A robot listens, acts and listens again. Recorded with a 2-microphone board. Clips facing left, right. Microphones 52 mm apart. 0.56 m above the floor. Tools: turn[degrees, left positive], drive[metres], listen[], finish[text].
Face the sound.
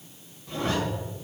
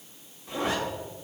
Thought: The zipper: about 20° right or 160° right.
Action: turn[-20]
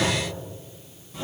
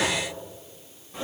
Thought: So it is at 145° right.
Action: turn[-145]
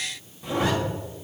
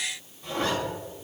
Thought: The zipper is now 15° left.
Action: turn[15]
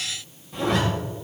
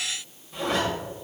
Action: finish[Facing the zipper.]